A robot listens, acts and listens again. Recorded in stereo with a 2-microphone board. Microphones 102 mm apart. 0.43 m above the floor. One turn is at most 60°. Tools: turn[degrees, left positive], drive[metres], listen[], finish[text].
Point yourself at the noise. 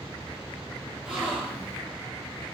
Action: turn[-30]
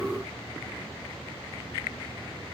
Action: listen[]
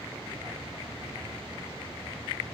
Action: finish[I heard a gasp, but can't make it out now. It was about 20° left or 140° right.]